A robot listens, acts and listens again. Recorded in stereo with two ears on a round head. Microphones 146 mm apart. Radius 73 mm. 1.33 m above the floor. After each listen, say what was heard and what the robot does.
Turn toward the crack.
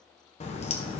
The crack: about 40° left or 140° left. Turn 40° left.
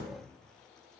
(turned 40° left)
Keep listening.
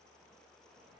I heard a crack, but can't make it out now. It was about straight ahead or 100° left.